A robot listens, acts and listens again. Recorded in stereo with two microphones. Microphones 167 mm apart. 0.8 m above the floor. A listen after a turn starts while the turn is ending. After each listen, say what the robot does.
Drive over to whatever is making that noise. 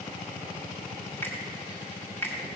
Turn 30° left.
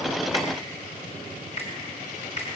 Turn 135° left.
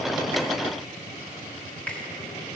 Keep listening.
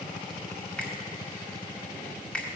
Drive 1.0 m forward.
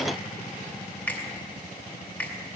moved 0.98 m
Turn 10° left.
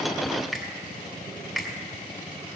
Drive 1.0 m forward.
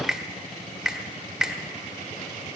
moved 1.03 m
Drive 1.0 m forward.
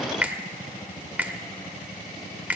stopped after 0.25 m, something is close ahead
Turn 10° right.
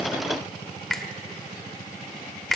Arrived at the finger snap, straight ahead.